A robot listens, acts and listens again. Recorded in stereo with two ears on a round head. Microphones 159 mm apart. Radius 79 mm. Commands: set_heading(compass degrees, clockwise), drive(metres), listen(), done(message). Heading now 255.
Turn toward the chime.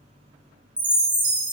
set_heading(285)
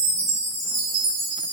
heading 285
set_heading(65)
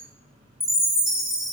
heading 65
done("Found it: a chime, straight ahead.")